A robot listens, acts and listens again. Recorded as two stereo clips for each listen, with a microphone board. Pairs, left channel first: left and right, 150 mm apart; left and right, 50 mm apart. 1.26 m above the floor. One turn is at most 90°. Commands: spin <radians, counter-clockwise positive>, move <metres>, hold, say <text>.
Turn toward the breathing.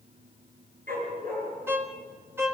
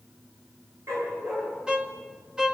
hold
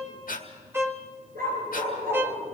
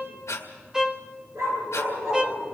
spin 1.31
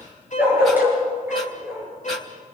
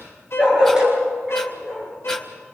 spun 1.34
hold
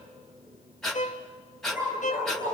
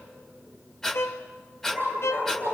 say Found it: breathing, straight ahead.